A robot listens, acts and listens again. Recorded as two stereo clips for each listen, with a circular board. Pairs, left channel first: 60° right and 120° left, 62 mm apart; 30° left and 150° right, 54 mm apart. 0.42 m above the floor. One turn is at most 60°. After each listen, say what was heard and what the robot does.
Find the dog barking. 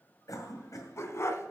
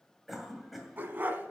The dog barking: 100° right. Turn 60° right.
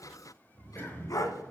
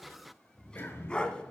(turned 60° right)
The dog barking is now 40° right. Turn 40° right.
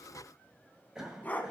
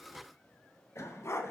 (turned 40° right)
Found it: a dog barking, straight ahead.